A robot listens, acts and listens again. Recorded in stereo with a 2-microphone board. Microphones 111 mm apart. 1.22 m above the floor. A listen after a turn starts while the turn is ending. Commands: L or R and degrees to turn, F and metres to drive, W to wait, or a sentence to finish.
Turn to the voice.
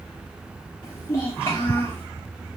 L25
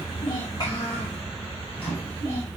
W
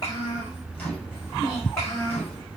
L25
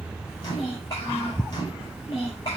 L130
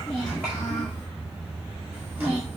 W
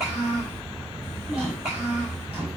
R25
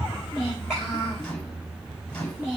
Facing the child speaking.